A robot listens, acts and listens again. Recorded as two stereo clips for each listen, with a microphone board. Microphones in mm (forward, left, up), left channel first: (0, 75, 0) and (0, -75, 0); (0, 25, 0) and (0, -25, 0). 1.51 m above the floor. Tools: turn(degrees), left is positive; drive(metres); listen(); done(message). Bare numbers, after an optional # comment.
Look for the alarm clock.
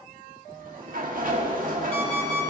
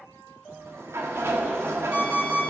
# The alarm clock: about 45° right or 135° right.
turn(-45)
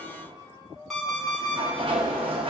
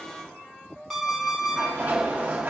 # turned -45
done("Facing the alarm clock.")